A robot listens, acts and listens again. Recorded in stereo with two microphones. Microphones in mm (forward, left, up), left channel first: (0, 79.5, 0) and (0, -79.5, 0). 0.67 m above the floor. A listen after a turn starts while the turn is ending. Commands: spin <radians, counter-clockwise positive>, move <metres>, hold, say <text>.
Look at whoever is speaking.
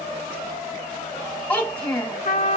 spin 0.52
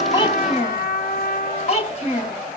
spin 2.44
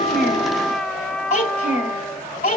spin 0.96
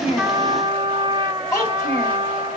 spin 0.35
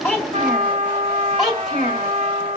say Found it: a child speaking, straight ahead, 2 to 4 m away.